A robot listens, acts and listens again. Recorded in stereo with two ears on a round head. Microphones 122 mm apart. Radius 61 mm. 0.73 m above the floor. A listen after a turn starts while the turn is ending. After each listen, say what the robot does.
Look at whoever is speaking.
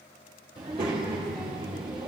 Turn 40° right.
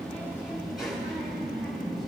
Found it: a child speaking, straight ahead.